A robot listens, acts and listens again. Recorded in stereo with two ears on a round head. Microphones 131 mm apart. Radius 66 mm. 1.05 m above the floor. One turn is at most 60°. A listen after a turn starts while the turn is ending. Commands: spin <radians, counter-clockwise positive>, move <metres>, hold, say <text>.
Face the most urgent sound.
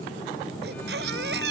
spin -1.05
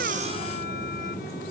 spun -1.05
spin -0.52
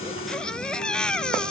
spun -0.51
say Facing the baby crying.